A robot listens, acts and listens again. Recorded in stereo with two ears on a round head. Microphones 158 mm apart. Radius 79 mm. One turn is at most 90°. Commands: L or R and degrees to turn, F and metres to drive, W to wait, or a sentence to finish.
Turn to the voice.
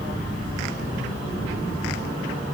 W
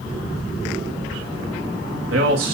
R90
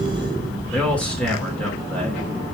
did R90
L10
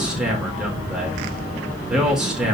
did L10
Facing the man speaking, over 4 m away.